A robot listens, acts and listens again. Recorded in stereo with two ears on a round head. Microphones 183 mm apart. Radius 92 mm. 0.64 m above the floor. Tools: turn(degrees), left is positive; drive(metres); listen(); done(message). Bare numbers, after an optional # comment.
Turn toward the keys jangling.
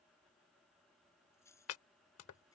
turn(30)
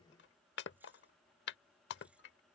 listen()
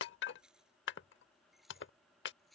done("Facing the keys jangling.")